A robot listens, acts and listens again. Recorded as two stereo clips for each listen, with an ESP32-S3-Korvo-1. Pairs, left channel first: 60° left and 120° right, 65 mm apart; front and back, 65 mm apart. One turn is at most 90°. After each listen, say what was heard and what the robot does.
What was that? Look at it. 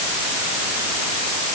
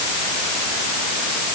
Keep listening.
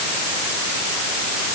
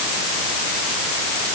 Keep listening.
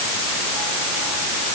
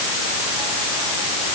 I can't make out anything to turn to.